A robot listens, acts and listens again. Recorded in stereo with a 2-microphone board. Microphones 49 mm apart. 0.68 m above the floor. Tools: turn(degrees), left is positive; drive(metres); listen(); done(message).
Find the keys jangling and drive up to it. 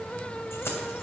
listen()
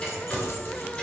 listen()
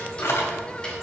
turn(degrees=65)
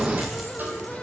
listen()
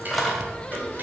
drive(metres=1.0)
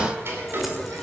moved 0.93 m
listen()
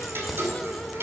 listen()
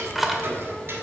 drive(metres=1.0)
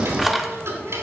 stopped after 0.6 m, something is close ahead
done("Arrived at the keys jangling, straight ahead.")